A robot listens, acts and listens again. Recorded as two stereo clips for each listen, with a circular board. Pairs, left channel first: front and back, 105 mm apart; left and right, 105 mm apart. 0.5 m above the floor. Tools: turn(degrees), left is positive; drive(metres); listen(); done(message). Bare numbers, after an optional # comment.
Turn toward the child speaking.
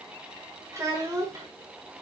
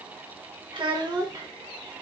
# The child speaking: 130° right.
turn(-130)
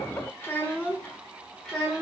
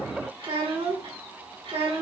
# The child speaking is now 85° right.
turn(-85)
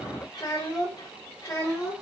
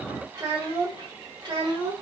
# The child speaking is now 50° right.
turn(-50)
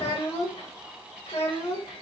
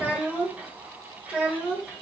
# The child speaking is now 10° right.
turn(-10)
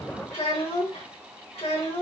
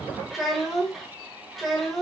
done("Facing the child speaking, 1 to 2 m away.")